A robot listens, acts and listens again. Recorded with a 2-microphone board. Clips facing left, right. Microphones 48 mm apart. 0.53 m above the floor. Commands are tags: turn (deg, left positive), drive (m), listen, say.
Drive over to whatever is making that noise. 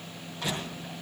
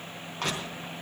<turn deg="-55"/>
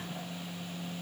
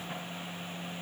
<listen/>
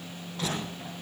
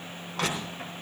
<turn deg="-70"/>
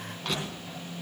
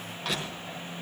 <drive m="1.0"/>
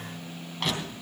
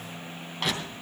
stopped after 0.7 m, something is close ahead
<say>Something is in my way. I am facing the crushing but have not reached it.</say>